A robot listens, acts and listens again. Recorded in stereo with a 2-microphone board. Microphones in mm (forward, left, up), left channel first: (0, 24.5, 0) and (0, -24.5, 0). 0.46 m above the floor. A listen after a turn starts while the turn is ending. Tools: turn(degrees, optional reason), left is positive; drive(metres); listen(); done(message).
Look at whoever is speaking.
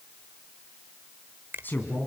turn(degrees=40, reason="The man speaking: about 40° left or 140° left.")
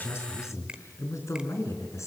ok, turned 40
turn(degrees=105, reason="So it is at 105° left.")
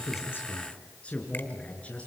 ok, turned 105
turn(degrees=25, reason="The man speaking is now 25° left.")
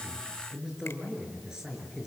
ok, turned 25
turn(degrees=-10, reason="The man speaking is now 10° right.")
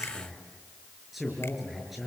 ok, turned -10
done("Facing the man speaking, over 4 m away.")